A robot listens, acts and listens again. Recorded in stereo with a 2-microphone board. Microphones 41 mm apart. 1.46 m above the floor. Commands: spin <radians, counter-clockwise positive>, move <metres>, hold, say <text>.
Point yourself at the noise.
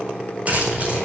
spin -0.61
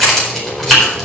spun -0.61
spin 0.17
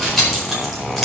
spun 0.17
say Facing the keys jangling.